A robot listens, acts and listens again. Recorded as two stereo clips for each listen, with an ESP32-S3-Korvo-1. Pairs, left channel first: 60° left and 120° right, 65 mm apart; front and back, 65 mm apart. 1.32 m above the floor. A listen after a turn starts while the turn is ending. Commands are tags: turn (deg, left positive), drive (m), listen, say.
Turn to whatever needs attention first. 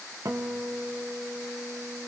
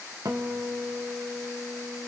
<listen/>
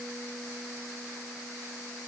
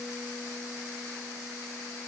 <listen/>
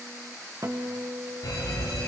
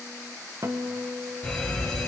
<turn deg="70"/>
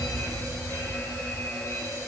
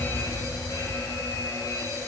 <turn deg="20"/>
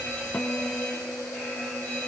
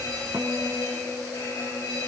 <say>Facing the fire alarm, over 4 m away.</say>